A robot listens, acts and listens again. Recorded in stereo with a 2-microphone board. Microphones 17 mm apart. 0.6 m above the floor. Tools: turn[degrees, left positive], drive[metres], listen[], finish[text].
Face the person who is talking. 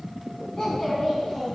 Thought: The child speaking: about 25° left or 155° left.
Action: turn[25]
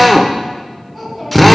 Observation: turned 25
Action: finish[Facing the child speaking.]